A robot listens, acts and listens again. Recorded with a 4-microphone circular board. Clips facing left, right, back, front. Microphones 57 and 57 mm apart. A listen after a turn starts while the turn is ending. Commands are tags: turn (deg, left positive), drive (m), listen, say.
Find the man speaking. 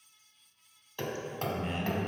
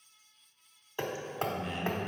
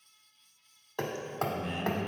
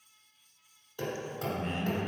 <turn deg="50"/>
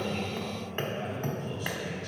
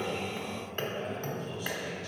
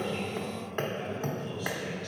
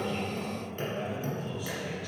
<turn deg="80"/>
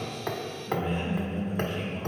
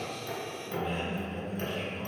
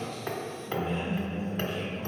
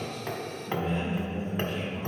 <turn deg="15"/>
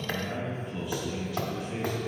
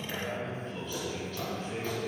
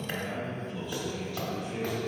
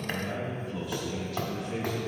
<say>Found it: a man speaking, straight ahead.</say>